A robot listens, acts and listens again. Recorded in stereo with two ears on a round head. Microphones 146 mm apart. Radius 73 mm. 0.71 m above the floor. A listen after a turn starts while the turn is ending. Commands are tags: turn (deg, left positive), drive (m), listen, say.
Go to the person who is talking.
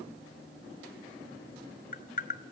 <listen/>
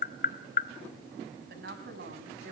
<turn deg="-65"/>
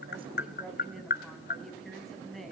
<drive m="1.0"/>
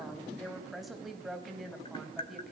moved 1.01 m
<drive m="1.0"/>
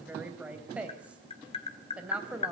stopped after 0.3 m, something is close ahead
<turn deg="-10"/>
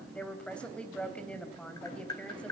<say>Blocked. The woman speaking is further on, straight ahead.</say>